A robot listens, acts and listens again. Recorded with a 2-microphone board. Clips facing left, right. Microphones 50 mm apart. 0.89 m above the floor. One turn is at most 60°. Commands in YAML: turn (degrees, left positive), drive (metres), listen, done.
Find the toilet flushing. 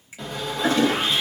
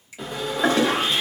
turn: -60
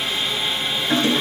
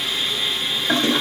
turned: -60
turn: -50
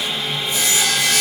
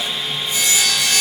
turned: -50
listen: true
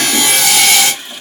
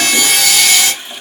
done: "Facing the toilet flushing, 1 to 2 m away."